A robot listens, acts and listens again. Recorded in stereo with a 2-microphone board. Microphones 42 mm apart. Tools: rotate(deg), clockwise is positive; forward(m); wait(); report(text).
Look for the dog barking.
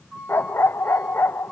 rotate(-70)
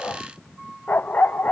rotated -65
rotate(-50)
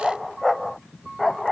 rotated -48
report("Facing the dog barking.")